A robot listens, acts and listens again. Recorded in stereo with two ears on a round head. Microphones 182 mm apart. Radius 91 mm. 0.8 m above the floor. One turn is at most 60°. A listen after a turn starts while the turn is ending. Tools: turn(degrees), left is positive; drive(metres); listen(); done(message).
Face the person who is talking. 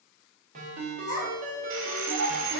turn(degrees=35)
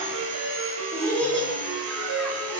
done("Facing the child speaking.")